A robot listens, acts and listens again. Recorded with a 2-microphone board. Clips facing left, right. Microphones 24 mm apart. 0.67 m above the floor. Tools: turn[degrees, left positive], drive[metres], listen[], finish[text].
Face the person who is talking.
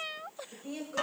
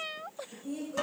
Thought: The woman speaking: about 45° left or 135° left.
Action: turn[45]
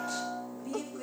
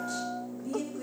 Thought: So it is at 15° left.
Action: turn[15]
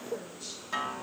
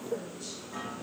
Action: listen[]
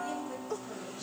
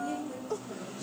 Thought: The woman speaking is now 15° left.
Action: turn[15]
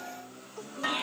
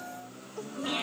Action: listen[]
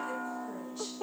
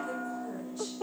Action: listen[]
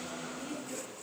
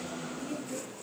Thought: The woman speaking is now 20° left.
Action: turn[20]
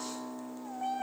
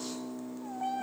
Action: listen[]
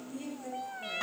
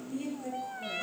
Action: finish[Found it: a woman speaking, straight ahead, over 4 m away.]